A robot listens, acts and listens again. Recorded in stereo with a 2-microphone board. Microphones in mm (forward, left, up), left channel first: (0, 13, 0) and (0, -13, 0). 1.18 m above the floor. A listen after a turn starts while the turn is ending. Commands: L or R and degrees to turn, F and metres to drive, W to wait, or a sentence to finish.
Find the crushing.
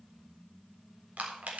R90
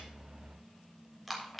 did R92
Found it: crushing, straight ahead.